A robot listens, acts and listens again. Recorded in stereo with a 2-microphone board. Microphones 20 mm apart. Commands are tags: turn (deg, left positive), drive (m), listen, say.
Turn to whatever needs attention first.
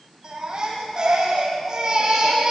<turn deg="-35"/>
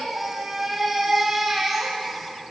<say>Facing the baby crying, over 4 m away.</say>